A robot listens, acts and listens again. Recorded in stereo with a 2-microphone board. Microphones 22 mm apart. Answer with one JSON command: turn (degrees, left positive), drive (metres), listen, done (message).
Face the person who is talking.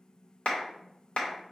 {"listen": true}
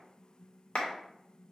{"listen": true}
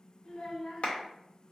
{"turn": 35}
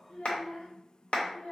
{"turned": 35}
{"turn": 105}
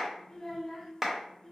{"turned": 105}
{"turn": 25}
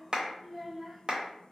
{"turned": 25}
{"turn": -10}
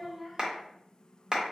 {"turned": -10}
{"done": "Facing the child speaking."}